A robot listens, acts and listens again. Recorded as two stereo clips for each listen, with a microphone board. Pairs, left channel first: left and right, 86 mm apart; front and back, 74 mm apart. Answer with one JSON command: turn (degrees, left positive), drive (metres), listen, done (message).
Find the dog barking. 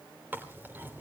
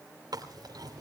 {"listen": true}
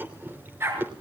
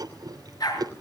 {"turn": -30}
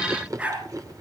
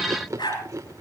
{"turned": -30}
{"turn": -15}
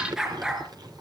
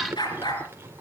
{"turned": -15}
{"turn": -10}
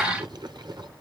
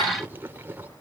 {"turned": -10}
{"listen": true}
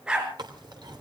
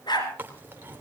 {"turn": -10}
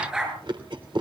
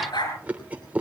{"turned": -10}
{"turn": -10}
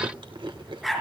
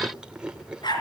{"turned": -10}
{"done": "Found it: a dog barking, straight ahead."}